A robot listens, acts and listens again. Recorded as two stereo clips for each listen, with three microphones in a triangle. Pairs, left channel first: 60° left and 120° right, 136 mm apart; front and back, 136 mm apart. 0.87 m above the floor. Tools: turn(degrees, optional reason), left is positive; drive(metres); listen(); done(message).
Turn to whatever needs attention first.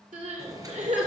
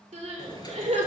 turn(degrees=-145, reason="The crying: 145° right.")
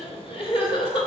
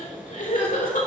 turn(degrees=15, reason="The crying is now 15° left.")
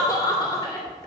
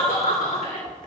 done("Facing the crying.")